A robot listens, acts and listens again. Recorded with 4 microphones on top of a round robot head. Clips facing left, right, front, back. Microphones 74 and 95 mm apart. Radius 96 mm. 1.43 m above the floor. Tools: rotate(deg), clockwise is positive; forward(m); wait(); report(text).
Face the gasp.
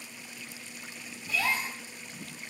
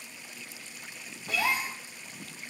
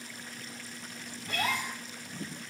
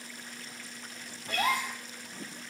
rotate(160)
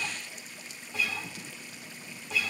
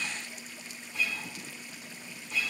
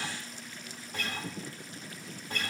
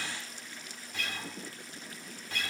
report("Facing where the gasp came from. I can't hear it now.")